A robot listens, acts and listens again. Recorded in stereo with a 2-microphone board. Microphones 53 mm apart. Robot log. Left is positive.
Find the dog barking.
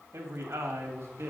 cmd idle
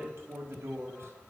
cmd idle
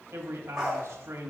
cmd yaw -30
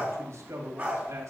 note: So it is at 155° right.
cmd yaw -155
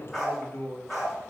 end: Found it: a dog barking, straight ahead.